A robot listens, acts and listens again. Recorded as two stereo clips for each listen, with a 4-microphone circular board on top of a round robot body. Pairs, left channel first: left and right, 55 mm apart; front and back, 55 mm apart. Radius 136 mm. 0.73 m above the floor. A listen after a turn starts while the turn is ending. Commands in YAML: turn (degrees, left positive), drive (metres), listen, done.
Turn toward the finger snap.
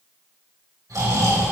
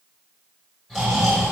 listen: true
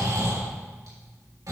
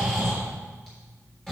listen: true
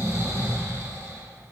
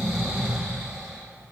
done: "I can't make out a finger snap, only snoring."